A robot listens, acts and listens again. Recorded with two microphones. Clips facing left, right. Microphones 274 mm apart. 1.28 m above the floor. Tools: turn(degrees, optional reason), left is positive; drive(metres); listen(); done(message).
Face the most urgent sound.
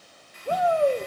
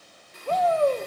turn(degrees=30)
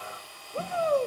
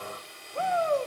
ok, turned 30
turn(degrees=135, reason="So it is at 135° left.")
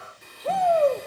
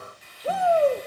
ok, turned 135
done("Found it: a shout, straight ahead.")